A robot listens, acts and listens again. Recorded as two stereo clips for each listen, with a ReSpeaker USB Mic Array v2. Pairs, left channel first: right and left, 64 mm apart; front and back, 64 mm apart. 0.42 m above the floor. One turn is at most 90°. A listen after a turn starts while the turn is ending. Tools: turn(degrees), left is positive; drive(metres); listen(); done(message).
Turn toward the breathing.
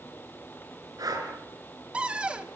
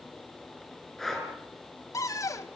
turn(degrees=85)
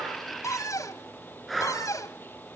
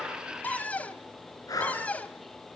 done("Facing the breathing, over 4 m away.")